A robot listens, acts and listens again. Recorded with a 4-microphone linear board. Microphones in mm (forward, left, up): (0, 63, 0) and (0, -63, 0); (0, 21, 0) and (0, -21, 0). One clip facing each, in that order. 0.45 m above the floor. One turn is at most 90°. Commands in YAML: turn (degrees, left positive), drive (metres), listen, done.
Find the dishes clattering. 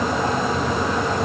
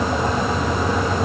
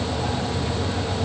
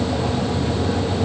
listen: true
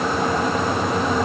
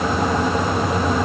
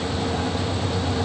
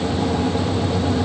listen: true
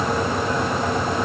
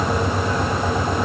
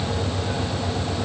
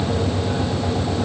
done: "I can't make out dishes clattering."